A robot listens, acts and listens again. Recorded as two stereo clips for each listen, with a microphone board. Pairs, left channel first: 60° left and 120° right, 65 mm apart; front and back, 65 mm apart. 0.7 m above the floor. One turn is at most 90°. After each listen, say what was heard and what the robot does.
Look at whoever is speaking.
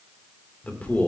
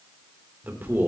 The man speaking: 125° left. Turn 90° left.
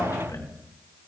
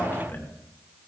The man speaking is now 55° left. Turn 55° left.
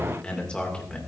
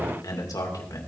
The man speaking is now 10° right. Turn 10° right.
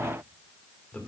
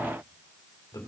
Found it: a man speaking, straight ahead, 2 to 4 m away.